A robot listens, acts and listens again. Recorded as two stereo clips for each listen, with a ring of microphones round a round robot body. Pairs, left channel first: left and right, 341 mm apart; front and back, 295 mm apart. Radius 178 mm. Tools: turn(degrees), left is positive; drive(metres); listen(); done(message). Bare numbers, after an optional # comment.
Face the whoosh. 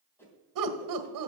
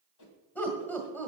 done("Facing the whoosh, 2 to 4 m away.")